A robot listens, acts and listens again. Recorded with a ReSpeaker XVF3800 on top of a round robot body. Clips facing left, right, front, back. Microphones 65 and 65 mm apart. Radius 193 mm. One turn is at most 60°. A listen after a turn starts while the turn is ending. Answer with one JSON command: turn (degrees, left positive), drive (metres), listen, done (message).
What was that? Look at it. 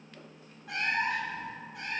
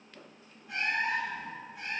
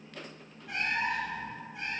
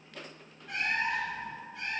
{"turn": 60}
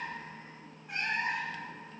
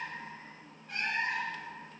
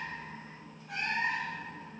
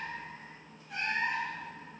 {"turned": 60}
{"turn": 10}
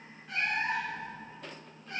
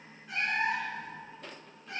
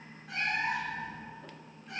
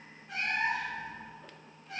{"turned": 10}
{"turn": -15}
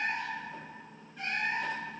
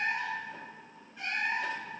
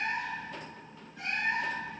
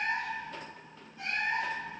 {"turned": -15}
{"done": "Facing the cat meowing."}